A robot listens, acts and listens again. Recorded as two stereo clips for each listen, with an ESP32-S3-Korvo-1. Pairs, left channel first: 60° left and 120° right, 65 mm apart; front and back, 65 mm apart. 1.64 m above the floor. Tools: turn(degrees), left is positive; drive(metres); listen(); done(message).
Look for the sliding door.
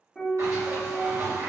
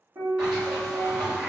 turn(degrees=-110)
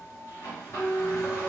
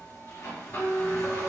turn(degrees=20)
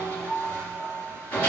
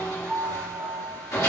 done("Facing the sliding door.")